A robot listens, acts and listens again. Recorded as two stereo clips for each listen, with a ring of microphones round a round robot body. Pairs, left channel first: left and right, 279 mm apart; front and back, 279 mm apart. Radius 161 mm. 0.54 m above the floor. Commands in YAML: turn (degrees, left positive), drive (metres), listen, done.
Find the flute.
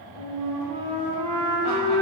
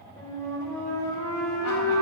turn: -80
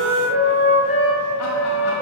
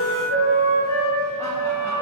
turn: -20
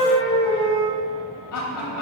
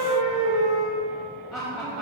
turn: -10
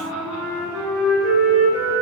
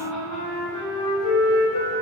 done: "Facing the flute, 1 to 2 m away."